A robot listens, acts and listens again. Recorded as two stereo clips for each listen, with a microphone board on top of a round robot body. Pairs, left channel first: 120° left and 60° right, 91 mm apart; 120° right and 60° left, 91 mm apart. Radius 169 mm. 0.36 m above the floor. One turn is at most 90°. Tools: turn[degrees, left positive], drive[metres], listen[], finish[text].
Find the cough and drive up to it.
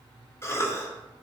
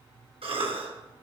Thought: The cough: 60° left.
Action: turn[60]
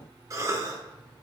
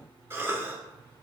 Action: drive[1.0]
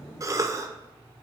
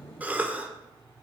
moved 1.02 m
Thought: The cough is now 10° right.
Action: turn[-10]
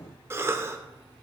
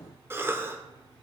Action: drive[1.0]
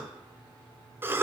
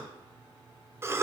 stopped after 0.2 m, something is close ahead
Action: finish[I am next to the cough.]